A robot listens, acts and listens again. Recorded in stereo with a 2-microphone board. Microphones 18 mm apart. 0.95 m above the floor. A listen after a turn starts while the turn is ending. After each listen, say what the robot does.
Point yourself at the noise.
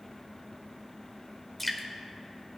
Turn 30° left.
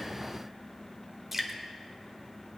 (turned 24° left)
Turn 15° right.
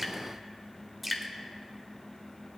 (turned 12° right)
Found it: dripping, straight ahead.